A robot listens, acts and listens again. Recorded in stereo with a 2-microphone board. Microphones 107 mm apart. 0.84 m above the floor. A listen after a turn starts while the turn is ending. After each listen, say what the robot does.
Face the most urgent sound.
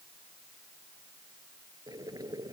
Keep listening.
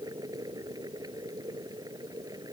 Keep listening.
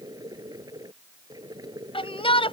Turn 60° left.
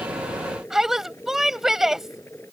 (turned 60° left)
Facing the shout.